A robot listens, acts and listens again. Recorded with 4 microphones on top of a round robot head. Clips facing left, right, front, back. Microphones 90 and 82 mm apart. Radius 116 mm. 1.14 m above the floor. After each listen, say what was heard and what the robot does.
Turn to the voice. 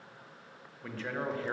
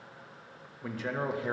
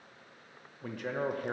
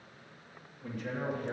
The man speaking: 15° right. Turn 15° right.
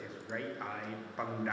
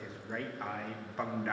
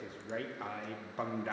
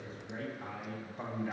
Facing the man speaking.